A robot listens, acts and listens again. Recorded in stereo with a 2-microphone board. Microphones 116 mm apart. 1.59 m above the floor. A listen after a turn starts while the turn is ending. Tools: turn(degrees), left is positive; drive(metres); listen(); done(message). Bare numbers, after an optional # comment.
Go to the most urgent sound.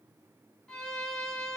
listen()
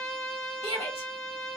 # The shout: about 55° left or 125° left.
turn(55)
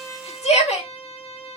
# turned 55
# So it is at 70° left.
turn(70)
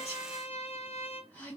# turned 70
# The shout is now 15° left.
turn(15)
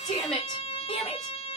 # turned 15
drive(1.0)
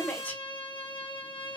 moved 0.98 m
# The shout is now 15° left.
turn(15)
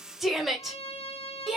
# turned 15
drive(1.0)
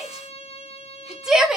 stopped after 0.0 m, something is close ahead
done("Arrived at the shout, straight ahead.")